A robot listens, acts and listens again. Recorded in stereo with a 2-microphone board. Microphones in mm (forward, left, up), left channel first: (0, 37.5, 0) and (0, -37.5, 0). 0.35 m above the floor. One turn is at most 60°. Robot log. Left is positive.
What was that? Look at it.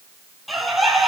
cmd yaw +30
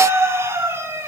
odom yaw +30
note: So it is at 30° right.
cmd yaw -30
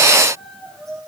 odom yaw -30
end: Found it: a bird, straight ahead.